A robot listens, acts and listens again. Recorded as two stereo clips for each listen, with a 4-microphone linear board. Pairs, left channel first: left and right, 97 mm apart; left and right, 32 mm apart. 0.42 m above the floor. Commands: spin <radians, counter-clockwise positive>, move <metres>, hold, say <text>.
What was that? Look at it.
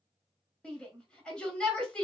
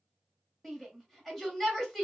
spin 0.52
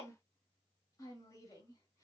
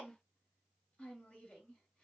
hold
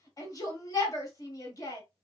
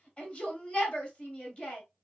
spin 2.44
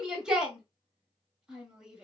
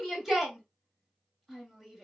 spin -0.17
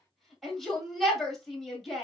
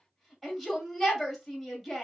say Found it: a shout, straight ahead, 1 to 2 m away.